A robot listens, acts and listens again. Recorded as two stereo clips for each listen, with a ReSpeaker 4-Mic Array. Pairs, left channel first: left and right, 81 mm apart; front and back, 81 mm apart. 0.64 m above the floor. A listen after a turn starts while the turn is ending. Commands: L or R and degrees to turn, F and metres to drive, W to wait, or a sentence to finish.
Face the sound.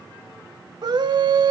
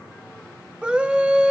R105
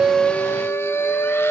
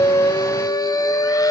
L35
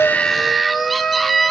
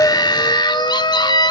Found it: a scream, straight ahead, 1 to 2 m away.